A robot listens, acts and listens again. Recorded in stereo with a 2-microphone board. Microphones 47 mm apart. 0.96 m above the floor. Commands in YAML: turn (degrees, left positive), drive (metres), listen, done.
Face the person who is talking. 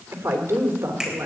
turn: -70
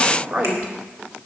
turn: -40
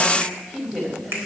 done: "Facing the woman speaking, over 4 m away."